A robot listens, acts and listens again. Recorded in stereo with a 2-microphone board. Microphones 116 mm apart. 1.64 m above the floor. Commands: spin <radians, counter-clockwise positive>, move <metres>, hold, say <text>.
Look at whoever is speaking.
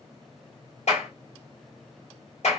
hold
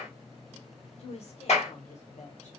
spin 1.57
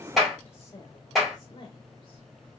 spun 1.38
spin 0.61
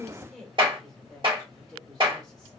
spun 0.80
say Facing the woman speaking, 1 to 2 m away.